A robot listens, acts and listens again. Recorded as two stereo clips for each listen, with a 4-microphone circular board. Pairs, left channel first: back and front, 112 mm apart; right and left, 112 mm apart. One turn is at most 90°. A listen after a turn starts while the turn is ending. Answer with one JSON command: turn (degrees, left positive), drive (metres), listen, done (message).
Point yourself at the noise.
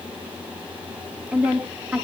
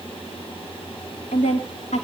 {"turn": -80}
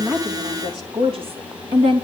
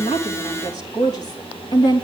{"turn": -35}
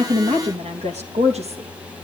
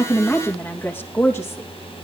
{"turn": -20}
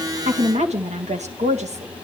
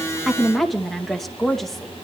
{"done": "Facing the woman speaking."}